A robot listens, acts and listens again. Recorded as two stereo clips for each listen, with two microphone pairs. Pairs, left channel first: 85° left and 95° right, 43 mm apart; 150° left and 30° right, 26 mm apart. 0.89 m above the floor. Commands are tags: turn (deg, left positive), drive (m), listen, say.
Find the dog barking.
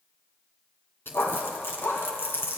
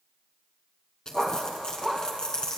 <turn deg="70"/>
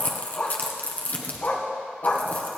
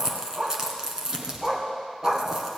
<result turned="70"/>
<turn deg="45"/>
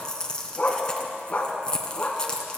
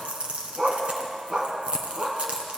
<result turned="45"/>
<turn deg="30"/>
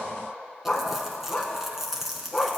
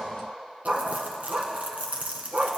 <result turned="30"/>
<say>Found it: a dog barking, straight ahead.</say>